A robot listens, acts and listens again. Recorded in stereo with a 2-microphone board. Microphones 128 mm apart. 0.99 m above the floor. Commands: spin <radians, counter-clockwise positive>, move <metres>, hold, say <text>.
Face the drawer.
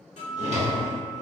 spin -1.05
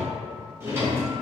spin -0.44
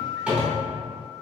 spin -0.17
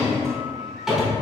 say Found it: a drawer, straight ahead.